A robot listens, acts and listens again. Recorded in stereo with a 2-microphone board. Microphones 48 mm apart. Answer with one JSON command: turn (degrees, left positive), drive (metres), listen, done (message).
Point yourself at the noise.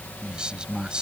{"turn": -20}
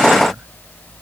{"listen": true}
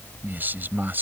{"turn": -135}
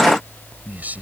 {"turn": -35}
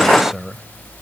{"done": "Found it: a man speaking, straight ahead."}